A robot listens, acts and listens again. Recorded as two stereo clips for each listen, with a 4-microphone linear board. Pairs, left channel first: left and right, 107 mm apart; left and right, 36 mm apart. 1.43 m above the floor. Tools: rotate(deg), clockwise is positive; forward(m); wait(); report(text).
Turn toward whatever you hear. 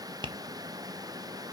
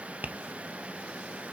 rotate(45)
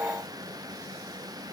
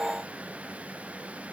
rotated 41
wait()
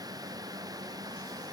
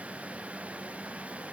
wait()
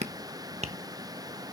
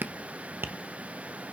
rotate(90)
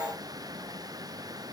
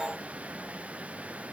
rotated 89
wait()
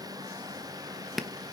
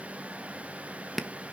report("Found it: tapping, straight ahead, 1 to 2 m away.")